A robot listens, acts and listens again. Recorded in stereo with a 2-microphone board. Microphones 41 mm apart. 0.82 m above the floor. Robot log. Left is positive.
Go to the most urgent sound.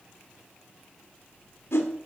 cmd idle
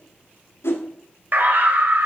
note: The scream: about 55° right or 125° right.
cmd yaw -55
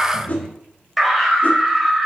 cmd fwd 1.0
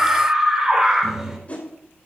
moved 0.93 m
note: The scream is now 10° right.
cmd yaw -10
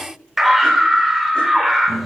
cmd fwd 1.0
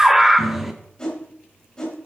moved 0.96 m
cmd fwd 1.0
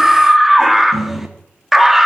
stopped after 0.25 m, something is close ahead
end: I am next to the scream.